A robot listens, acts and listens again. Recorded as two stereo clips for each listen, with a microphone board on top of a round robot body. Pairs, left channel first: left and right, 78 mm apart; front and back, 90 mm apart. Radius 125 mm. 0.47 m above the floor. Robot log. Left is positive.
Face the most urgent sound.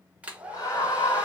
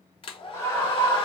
note: The scream: 55° left.
cmd yaw +55
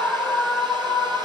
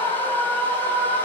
end: Facing the scream.